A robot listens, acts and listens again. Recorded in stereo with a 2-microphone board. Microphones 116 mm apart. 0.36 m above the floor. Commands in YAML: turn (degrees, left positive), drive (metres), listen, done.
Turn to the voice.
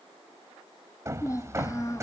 turn: 25
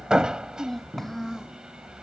done: "Facing the child speaking."